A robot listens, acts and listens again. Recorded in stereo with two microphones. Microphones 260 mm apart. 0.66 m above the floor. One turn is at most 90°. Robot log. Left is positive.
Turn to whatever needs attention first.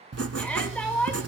cmd yaw +30
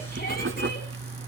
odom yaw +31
cmd idle
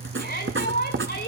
note: So it is at 140° left.
cmd yaw +90
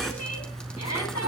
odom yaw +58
note: The shout is now 85° left.
cmd yaw +85
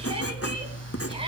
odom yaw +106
note: Nothing new. It was at 20° right.
cmd yaw -20
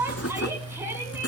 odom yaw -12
note: The shout is now 10° right.
cmd yaw -10
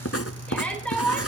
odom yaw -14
end: Found it: a shout, straight ahead.